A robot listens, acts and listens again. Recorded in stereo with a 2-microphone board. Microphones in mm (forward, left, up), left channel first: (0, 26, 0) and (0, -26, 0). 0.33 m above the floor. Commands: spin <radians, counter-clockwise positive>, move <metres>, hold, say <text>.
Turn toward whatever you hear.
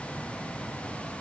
hold
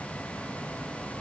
hold
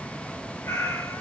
spin 1.13
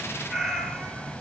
say Found it: a cat meowing, straight ahead.